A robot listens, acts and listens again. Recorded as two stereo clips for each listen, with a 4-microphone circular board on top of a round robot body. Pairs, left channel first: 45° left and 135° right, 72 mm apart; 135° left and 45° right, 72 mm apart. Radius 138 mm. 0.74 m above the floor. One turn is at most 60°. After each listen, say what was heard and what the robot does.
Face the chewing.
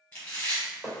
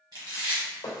The chewing: 25° right. Turn 25° right.
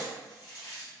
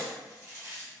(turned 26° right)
Found it: chewing, straight ahead.